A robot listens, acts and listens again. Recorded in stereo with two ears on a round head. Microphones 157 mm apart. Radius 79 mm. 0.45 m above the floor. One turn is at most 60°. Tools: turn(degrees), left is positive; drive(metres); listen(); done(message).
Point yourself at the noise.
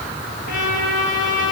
turn(degrees=55)
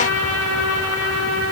turn(degrees=60)
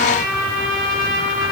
done("Facing the trumpet, over 4 m away.")